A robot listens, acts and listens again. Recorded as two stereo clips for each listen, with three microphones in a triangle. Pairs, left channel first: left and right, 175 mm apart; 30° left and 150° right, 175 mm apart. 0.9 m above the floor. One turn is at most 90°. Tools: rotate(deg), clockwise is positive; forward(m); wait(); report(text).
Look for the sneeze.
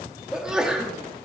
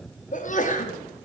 report("Found it: a sneeze, straight ahead.")